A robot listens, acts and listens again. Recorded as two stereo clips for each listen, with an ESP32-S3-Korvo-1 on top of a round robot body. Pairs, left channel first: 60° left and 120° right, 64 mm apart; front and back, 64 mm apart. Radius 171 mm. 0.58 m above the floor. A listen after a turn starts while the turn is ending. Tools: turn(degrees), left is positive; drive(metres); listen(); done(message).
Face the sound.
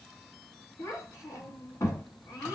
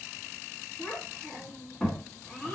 turn(degrees=80)
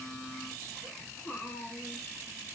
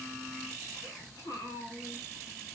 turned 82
done("Facing the child speaking, 2 to 4 m away.")